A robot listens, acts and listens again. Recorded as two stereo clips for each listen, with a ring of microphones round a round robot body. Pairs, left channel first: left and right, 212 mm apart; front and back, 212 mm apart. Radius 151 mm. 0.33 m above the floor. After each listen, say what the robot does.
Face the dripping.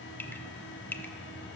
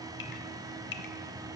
Turn 10° left.
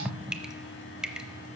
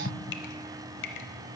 Found it: dripping, straight ahead, under 1 m away.